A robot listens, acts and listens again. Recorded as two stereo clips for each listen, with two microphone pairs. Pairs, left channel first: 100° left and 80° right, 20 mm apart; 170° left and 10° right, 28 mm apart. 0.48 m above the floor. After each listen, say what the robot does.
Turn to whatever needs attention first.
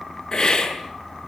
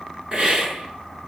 Keep listening.
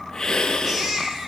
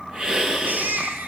Turn 10° right.
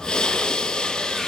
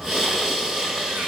Keep listening.
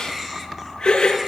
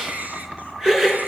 Facing the baby crying, over 4 m away.